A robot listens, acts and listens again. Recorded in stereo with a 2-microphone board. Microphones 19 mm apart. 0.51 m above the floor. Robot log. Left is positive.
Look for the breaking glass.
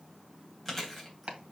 cmd idle
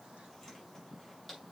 cmd idle
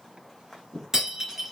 note: The breaking glass: about 20° right or 160° right.
cmd yaw -20
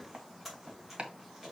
cmd idle
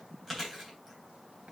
end: I heard breaking glass, but can't make it out now. It was about straight ahead or 140° right.